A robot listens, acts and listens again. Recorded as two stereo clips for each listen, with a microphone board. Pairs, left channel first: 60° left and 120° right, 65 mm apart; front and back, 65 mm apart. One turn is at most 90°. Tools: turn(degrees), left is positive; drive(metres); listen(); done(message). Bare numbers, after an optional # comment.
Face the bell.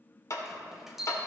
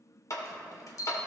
# The bell: 35° right.
turn(-35)
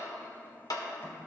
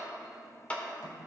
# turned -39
listen()
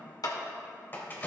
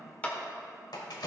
done("Found it: a bell, straight ahead, 1 to 2 m away.")